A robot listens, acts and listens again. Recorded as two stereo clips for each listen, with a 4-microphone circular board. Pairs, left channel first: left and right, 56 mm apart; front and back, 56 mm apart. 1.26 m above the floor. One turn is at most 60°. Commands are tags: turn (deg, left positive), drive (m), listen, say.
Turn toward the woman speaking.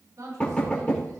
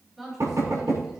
<turn deg="-60"/>
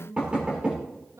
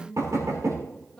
<turn deg="-60"/>
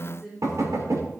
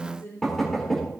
<say>Facing the woman speaking.</say>